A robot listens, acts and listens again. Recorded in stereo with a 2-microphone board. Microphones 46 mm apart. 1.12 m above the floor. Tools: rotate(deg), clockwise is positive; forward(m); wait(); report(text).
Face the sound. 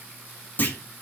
rotate(-45)
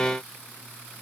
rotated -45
wait()
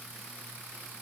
report("I heard a clunk, but can't make it out now. It was about straight ahead or 90° left.")